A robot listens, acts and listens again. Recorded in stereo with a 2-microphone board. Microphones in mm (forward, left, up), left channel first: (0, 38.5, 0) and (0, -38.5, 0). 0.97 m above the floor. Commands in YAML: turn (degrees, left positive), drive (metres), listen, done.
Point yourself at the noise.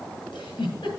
turn: 90
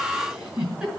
turn: -10
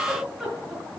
done: "Facing the giggle, over 4 m away."